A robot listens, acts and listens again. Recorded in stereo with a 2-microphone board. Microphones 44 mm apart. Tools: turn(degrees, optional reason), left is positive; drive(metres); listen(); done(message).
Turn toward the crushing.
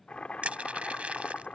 turn(degrees=-30, reason="The crushing: about 30° right or 150° right.")
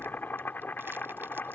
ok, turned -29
listen()
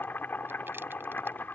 listen()
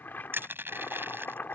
turn(degrees=-120, reason="So it is at 120° right.")
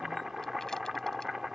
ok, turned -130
turn(degrees=10, reason="Nothing new. It was at 10° left.")
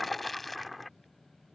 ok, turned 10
done("Found it: crushing, straight ahead.")